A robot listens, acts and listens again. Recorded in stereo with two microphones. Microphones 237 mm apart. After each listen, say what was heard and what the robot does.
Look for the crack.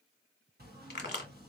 The crack: about 45° left or 135° left. Turn 45° left.
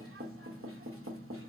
Keep listening.
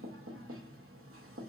I heard a crack, but can't make it out now. It was about straight ahead or 90° left.